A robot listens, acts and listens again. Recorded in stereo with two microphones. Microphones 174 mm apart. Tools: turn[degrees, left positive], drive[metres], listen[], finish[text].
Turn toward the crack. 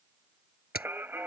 Thought: The crack: about 60° left or 120° left.
Action: turn[60]
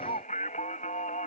Action: listen[]
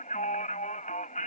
Action: finish[I heard a crack, but can't make it out now. It was about straight ahead or 60° left.]